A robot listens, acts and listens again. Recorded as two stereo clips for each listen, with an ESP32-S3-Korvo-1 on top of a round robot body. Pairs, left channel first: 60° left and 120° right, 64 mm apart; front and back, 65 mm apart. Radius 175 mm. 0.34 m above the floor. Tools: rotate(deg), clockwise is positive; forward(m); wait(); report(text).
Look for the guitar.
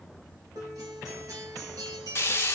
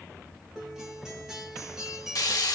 rotate(100)
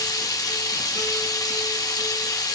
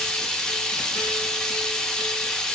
wait()
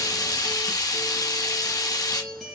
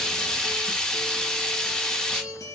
rotate(30)
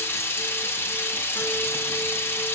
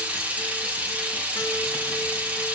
wait()
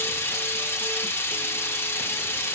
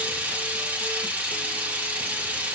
wait()
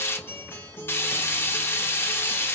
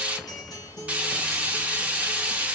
report("Found it: a guitar, straight ahead.")